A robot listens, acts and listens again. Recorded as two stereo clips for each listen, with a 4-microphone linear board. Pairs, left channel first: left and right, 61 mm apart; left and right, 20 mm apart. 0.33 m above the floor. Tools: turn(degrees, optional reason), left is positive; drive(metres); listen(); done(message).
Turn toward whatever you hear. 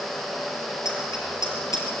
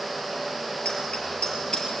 turn(degrees=65, reason="The bicycle bell: about 65° left or 115° left.")
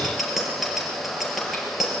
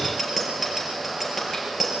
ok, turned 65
done("Facing the bicycle bell, over 4 m away.")